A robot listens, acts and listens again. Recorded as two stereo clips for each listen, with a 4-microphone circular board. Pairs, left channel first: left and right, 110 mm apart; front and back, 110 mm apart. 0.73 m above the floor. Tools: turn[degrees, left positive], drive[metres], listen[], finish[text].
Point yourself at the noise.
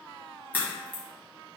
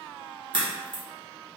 Thought: The crack: 160° left.
Action: turn[160]
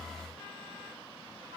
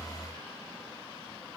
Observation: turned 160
Action: finish[Facing where the crack came from. I can't hear it now.]